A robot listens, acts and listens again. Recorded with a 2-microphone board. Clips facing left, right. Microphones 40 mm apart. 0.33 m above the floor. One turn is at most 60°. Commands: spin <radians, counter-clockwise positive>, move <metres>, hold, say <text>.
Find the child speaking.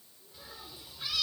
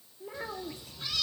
spin -1.05
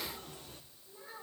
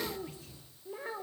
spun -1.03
spin -1.05
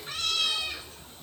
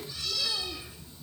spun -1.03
hold
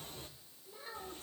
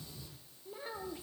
spin -0.35
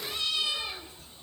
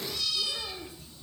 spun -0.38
hold
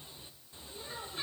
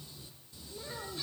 say Facing the child speaking.